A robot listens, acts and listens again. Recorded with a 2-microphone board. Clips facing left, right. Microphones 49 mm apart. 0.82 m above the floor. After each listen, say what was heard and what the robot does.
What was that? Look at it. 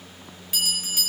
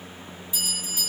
The bell: about 75° left or 105° left. Turn 75° left.
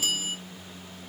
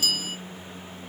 So it is at 25° left. Turn 25° left.
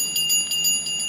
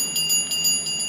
Found it: a bell, straight ahead.